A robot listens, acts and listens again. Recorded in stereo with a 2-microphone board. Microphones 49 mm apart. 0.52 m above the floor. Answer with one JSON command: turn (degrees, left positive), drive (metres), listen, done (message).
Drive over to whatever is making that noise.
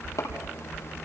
{"turn": 90}
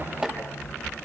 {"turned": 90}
{"turn": -20}
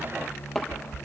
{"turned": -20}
{"drive": 1.0}
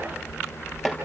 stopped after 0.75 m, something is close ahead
{"done": "Something is in my way. I am facing the chopping but have not reached it."}